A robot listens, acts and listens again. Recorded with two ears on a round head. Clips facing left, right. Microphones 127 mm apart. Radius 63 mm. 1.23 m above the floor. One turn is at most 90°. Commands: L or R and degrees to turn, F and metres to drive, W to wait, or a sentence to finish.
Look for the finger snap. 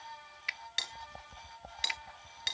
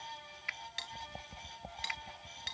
L35
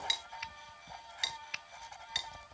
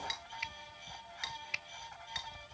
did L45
R10
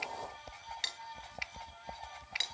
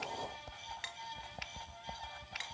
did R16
Found it: a finger snap, straight ahead.